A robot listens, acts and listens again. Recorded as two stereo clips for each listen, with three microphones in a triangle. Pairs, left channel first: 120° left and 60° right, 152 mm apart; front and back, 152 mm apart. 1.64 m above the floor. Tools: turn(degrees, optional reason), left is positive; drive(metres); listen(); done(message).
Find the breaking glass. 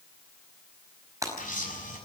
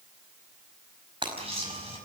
turn(degrees=-125, reason="The breaking glass: 125° right.")
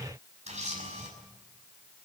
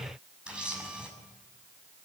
done("Facing where the breaking glass came from. I can't hear it now.")